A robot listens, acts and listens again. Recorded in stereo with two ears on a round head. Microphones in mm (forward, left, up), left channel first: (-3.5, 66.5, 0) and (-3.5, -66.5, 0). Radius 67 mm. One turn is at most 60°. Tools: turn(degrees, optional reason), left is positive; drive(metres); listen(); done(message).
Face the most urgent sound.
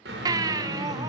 turn(degrees=-25, reason="The baby crying: about 25° right or 155° right.")
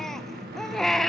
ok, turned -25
done("Facing the baby crying.")